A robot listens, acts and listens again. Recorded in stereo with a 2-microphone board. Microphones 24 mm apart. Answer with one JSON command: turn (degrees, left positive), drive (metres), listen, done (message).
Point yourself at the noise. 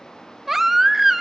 {"turn": -30}
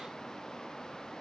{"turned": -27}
{"listen": true}
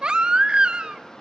{"turn": -140}
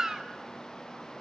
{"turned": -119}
{"turn": -20}
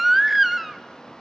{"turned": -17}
{"done": "Facing the baby crying, under 1 m away."}